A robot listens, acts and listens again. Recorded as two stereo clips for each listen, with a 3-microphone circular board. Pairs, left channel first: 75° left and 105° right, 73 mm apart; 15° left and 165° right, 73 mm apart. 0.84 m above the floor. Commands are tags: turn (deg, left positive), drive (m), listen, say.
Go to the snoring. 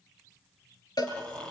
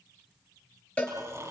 <turn deg="150"/>
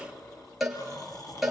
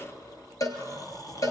<turn deg="45"/>
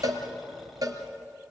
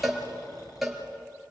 <turn deg="-15"/>
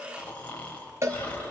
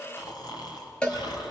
<drive m="1.0"/>
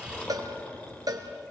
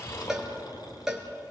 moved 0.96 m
<drive m="1.0"/>
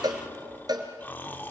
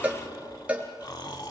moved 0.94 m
<turn deg="15"/>
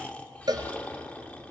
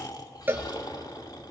<drive m="1.0"/>
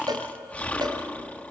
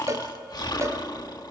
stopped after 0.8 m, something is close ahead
<say>Arrived at the snoring, straight ahead.</say>